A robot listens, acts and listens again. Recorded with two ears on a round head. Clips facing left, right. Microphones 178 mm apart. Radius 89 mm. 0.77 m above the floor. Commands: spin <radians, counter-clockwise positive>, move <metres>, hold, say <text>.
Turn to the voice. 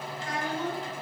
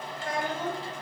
spin -0.79
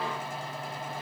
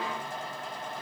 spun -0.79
hold
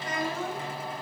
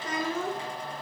spin -1.92
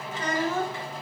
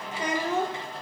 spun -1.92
spin -0.35
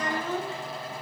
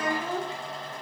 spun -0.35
spin -0.26
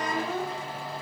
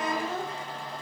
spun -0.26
say Facing the child speaking.